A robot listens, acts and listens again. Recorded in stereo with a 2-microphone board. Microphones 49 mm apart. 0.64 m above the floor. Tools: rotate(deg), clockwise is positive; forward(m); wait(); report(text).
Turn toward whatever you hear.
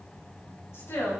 rotate(-65)
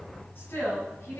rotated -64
rotate(-50)
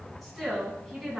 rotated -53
report("Facing the woman speaking, over 4 m away.")